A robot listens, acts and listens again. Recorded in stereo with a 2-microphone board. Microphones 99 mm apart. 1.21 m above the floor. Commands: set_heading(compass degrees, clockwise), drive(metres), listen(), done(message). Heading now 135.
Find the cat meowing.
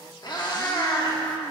set_heading(85)
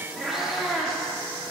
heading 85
done("Facing the cat meowing, 1 to 2 m away.")